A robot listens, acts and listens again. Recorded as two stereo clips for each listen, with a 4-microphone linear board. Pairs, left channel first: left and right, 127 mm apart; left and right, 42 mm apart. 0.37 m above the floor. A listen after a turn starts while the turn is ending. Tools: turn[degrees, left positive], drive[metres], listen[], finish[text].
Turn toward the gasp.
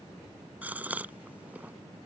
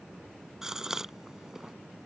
Action: turn[-30]
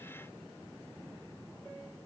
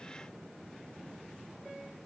Action: listen[]
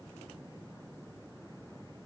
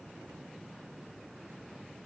Action: finish[I heard a gasp, but can't make it out now. It was about 15° left or 135° right.]